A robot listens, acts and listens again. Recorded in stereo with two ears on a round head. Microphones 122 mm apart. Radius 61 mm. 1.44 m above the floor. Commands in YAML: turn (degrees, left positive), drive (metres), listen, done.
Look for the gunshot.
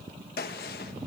turn: 90
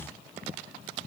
done: "I heard a gunshot from this way, but can't make it out now."